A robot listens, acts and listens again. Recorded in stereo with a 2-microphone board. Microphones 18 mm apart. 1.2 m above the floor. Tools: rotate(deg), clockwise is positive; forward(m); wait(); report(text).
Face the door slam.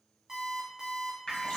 wait()
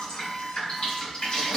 wait()
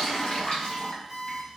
report("I can't make out a door slam to turn to.")